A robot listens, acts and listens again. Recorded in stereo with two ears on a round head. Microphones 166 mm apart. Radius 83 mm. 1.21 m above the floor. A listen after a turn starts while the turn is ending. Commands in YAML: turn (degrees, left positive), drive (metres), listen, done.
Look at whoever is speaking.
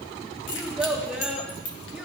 turn: -30
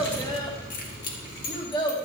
turn: 25
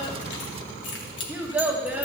turn: -10
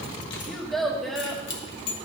done: "Facing the child speaking, 1 to 2 m away."